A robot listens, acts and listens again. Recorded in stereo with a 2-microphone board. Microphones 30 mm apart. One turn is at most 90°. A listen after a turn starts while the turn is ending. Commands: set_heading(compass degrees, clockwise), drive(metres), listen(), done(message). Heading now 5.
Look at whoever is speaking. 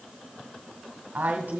set_heading(70)
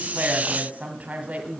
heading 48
set_heading(103)
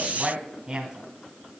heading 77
set_heading(102)
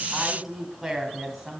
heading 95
set_heading(105)
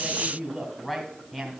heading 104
done("Found it: a woman speaking, straight ahead.")